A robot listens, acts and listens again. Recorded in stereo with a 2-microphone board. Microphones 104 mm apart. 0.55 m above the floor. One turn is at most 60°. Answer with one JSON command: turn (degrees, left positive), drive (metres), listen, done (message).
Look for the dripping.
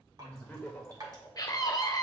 {"turn": -40}
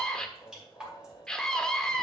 {"turn": -10}
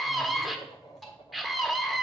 {"done": "Facing the dripping, 2 to 4 m away."}